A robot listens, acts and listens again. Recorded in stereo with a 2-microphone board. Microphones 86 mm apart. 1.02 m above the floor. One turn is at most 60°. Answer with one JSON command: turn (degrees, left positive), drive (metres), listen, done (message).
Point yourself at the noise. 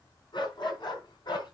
{"turn": 60}
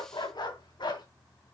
{"turn": 60}
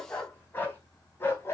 {"turn": 30}
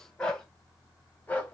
{"turn": 20}
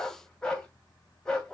{"turn": 10}
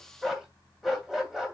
{"done": "Found it: a dog barking, straight ahead."}